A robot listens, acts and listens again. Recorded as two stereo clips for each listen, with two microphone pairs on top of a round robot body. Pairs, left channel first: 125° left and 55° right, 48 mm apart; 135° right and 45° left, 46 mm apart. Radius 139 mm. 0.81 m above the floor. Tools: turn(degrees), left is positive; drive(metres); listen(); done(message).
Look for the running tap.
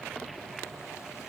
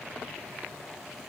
listen()
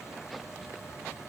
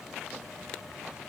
listen()
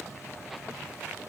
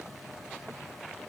done("I can't make out a running tap.")